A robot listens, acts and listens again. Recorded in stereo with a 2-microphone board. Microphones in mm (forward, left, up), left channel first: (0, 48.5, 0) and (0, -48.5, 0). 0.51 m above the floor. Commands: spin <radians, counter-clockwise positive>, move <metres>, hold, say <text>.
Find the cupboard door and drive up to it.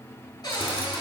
spin 0.79
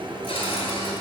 spin 1.57
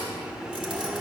hold
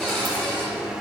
move 1.0
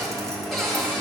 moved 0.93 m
move 1.0
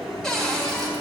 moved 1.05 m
move 1.0
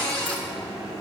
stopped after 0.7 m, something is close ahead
spin 0.26
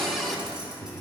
say Arrived at the cupboard door, straight ahead.